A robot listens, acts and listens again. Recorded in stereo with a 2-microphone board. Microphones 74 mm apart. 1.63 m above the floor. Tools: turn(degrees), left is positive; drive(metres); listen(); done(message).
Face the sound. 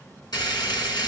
turn(degrees=60)
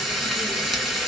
done("Facing the frying, 2 to 4 m away.")